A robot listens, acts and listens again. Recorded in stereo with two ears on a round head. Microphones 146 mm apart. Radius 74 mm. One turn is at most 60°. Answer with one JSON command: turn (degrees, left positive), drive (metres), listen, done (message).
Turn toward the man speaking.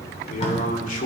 {"turn": 50}
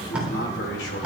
{"turn": 60}
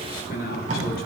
{"turn": 60}
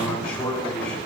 {"turn": 10}
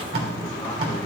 {"listen": true}
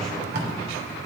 {"listen": true}
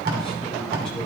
{"done": "I heard a man speaking from this way, but can't make it out now."}